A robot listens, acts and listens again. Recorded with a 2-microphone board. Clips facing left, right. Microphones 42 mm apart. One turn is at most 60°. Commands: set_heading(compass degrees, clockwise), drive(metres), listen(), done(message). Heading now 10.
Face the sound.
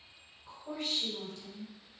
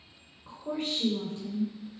set_heading(35)
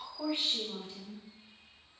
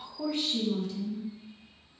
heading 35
set_heading(5)
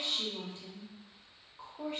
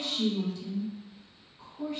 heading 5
set_heading(320)
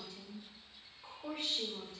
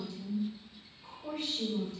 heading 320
set_heading(295)
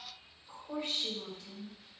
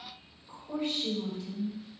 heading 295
done("Found it: a woman speaking, straight ahead, 2 to 4 m away.")